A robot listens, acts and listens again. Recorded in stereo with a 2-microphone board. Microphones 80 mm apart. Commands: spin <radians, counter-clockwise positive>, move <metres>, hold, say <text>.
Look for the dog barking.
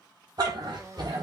spin -1.13
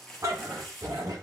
spin -0.87
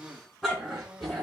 say Facing the dog barking.